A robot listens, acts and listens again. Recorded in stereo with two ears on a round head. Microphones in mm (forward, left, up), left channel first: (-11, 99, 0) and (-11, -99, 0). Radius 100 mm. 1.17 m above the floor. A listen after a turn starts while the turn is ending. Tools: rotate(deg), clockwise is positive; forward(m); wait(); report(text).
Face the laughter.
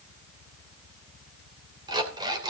wait()
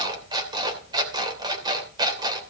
wait()
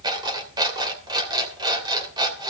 report("I can't make out laughter, only an alarm clock.")